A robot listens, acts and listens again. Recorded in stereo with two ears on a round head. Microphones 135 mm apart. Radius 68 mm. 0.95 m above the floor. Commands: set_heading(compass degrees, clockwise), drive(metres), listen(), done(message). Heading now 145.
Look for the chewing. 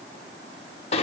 listen()
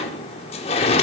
listen()
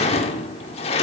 done("I can't make out chewing to turn to.")